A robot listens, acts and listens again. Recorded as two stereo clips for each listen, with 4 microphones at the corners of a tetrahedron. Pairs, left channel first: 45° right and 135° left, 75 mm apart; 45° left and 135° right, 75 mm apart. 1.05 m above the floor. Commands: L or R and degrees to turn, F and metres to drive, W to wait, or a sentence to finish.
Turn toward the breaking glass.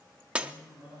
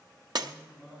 R150
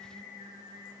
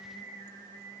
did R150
I heard breaking glass from this way, but can't make it out now.